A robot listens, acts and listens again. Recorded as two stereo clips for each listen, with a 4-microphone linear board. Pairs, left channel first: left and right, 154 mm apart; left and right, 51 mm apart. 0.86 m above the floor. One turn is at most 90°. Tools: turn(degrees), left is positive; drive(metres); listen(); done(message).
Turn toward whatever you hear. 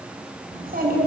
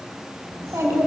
turn(degrees=-70)
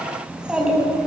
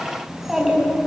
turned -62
done("Facing the child speaking.")